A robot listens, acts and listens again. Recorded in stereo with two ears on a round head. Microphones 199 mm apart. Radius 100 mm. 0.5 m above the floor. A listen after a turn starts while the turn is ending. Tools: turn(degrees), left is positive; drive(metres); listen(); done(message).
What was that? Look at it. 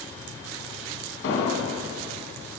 turn(degrees=65)
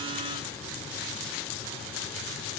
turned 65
listen()
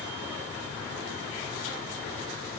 done("I heard an explosion, but can't make it out now. It was about straight ahead or 50° left.")